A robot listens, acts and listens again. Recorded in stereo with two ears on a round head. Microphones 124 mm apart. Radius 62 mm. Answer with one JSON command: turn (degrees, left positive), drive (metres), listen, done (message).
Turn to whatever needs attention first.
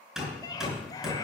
{"turn": 30}
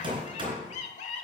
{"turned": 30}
{"turn": 110}
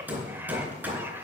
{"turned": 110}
{"turn": -20}
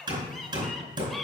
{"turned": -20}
{"done": "Facing the scream."}